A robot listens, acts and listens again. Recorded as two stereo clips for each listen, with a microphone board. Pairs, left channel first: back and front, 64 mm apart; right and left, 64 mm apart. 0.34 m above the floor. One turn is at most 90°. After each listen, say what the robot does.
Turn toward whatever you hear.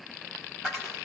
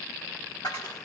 Turn 90° right.
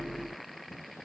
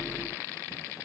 I heard a dropped coin from this way, but can't make it out now.